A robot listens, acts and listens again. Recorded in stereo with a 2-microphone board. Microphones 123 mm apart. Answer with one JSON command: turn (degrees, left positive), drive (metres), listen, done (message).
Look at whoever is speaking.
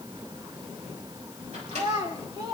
{"turn": -40}
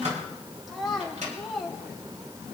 {"done": "Found it: a child speaking, straight ahead."}